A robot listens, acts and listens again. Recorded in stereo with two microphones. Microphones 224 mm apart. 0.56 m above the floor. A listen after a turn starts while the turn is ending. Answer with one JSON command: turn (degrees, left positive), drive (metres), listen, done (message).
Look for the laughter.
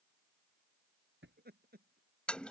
{"turn": -45}
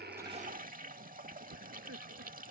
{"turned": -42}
{"turn": -95}
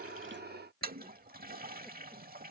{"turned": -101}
{"listen": true}
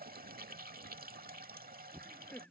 {"done": "Found it: laughter, straight ahead."}